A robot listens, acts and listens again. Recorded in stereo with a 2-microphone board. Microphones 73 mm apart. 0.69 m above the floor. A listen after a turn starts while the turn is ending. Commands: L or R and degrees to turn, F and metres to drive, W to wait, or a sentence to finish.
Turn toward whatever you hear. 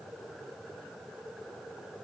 W
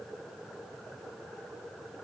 W
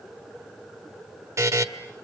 R45
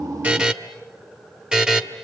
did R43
R10
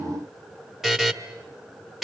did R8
Found it: a buzzer, straight ahead.